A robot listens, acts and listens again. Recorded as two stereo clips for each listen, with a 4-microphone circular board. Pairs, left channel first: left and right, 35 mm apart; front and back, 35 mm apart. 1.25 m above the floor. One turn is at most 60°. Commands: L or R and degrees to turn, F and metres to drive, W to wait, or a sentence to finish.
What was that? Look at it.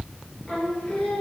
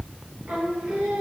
L60
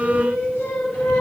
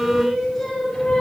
L60
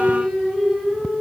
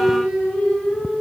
Facing the singing.